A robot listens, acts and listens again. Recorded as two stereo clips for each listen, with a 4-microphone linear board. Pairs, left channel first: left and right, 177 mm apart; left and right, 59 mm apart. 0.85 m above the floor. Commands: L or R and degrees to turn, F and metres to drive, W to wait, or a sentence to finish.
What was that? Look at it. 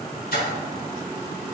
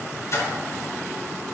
L60
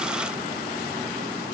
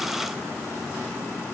W
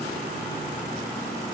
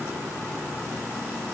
I heard a splash, but can't make it out now. It was about straight ahead or 60° left.